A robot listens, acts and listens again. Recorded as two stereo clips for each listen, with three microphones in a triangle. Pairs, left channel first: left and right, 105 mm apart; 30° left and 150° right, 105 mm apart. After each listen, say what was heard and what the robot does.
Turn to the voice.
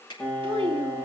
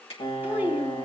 The child speaking: 80° right. Turn 80° right.
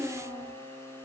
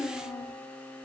Facing the child speaking.